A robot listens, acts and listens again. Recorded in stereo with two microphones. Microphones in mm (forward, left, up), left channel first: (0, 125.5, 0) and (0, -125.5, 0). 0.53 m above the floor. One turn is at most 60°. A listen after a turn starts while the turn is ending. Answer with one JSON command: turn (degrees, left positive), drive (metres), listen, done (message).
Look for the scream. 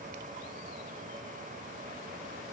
{"listen": true}
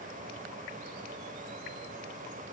{"listen": true}
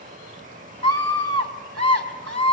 {"turn": -60}
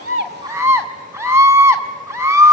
{"turn": -10}
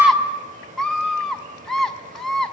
{"done": "Found it: a scream, straight ahead, over 4 m away."}